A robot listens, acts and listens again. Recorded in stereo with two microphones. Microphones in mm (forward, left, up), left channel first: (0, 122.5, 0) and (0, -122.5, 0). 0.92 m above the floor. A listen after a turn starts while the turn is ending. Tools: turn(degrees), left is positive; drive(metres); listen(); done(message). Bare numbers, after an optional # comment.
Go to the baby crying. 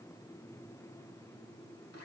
listen()
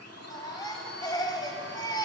# The baby crying: about 15° left or 165° left.
turn(15)
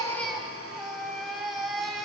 drive(1.0)
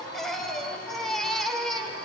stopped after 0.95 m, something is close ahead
done("Arrived at the baby crying, straight ahead.")